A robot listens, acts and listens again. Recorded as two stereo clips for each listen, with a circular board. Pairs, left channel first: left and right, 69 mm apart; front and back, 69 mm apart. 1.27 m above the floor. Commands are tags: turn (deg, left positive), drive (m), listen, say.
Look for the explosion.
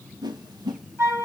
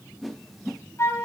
<listen/>
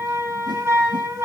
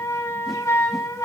<listen/>
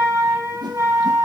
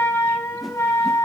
<say>I can't make out an explosion to turn to.</say>